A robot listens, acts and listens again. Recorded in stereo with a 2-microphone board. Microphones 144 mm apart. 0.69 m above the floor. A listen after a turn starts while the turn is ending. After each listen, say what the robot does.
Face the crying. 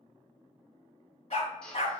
Keep listening.
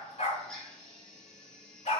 Keep listening.
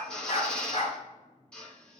I can't make out crying, only a drill and a dog barking.